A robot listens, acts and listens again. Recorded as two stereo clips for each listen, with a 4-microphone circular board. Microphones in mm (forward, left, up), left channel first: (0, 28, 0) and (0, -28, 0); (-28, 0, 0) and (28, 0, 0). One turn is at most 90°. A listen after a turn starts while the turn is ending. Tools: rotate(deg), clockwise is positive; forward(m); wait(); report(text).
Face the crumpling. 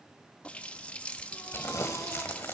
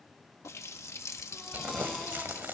rotate(-50)
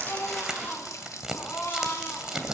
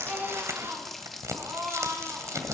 rotate(15)
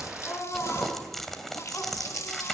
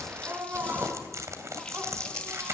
report("Found it: crumpling, straight ahead, 2 to 4 m away.")